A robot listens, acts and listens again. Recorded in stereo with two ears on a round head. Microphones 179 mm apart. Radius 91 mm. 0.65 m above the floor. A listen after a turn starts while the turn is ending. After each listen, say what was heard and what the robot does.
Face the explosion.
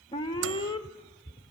Keep listening.
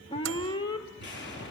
The explosion: about 65° left or 115° left. Turn 65° left.
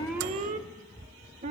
Keep listening.
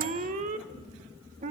I heard an explosion, but can't make it out now. It was about straight ahead or 50° left.